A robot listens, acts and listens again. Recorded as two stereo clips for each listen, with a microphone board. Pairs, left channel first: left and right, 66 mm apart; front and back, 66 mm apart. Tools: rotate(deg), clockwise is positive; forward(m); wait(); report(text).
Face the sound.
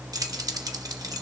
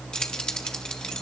rotate(75)
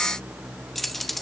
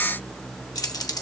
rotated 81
report("Found it: keys jangling, straight ahead.")